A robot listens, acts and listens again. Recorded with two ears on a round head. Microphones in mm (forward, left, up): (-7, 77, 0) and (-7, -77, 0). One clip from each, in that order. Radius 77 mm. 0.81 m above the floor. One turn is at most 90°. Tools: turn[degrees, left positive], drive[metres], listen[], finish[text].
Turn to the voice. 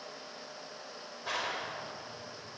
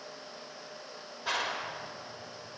Action: listen[]
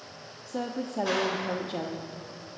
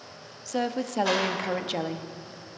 Thought: The woman speaking: about 60° right or 120° right.
Action: turn[-60]
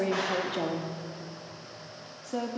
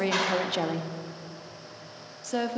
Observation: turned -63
Thought: So it is at 50° right.
Action: turn[-50]
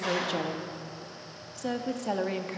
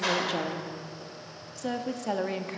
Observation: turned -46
Action: finish[Found it: a woman speaking, straight ahead.]